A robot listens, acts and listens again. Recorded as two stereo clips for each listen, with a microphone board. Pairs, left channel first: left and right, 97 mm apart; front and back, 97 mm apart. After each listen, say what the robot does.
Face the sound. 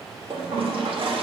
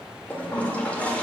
Turn 75° right.
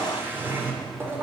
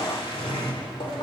Turn 20° right.
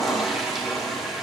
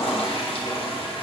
Found it: a toilet flushing, straight ahead.